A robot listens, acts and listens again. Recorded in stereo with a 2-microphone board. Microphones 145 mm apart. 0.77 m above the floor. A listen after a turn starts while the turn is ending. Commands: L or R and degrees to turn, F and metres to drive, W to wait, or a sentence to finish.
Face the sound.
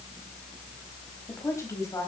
L25
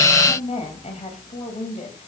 L125
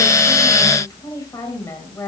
L20
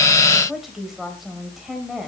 Facing the woman speaking, 2 to 4 m away.